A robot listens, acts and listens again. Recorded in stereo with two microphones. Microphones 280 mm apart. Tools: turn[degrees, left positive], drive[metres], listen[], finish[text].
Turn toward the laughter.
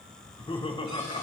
Thought: The laughter: about 20° left or 160° left.
Action: turn[20]
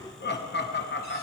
Thought: So it is at 140° left.
Action: turn[140]
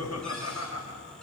Thought: The laughter is now 60° left.
Action: turn[60]
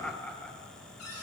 Action: finish[Found it: laughter, straight ahead, 1 to 2 m away.]